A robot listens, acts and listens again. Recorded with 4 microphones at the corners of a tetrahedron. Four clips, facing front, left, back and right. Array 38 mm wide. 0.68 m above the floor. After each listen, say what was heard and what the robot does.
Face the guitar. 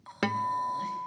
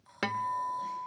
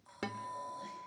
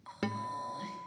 The guitar: 35° left. Turn 35° left.
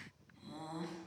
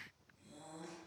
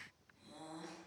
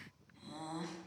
Keep listening.
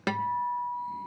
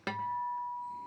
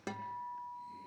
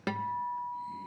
Facing the guitar.